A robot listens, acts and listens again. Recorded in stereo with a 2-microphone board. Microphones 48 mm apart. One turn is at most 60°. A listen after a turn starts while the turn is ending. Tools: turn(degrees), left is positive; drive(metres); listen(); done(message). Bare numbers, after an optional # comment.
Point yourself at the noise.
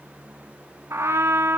# The trumpet: about 65° right or 115° right.
turn(-60)
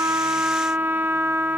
# So it is at 55° right.
turn(-55)
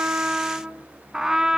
# The trumpet is now 10° right.
turn(-10)
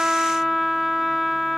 done("Facing the trumpet.")